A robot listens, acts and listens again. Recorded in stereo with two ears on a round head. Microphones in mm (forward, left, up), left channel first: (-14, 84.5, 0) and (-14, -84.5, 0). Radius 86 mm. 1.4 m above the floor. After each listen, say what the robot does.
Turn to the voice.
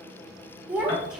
Turn 30° left.
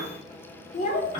Turn 135° left.
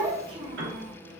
Turn 35° right.
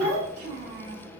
Turn 40° right.
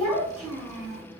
Facing the child speaking, 1 to 2 m away.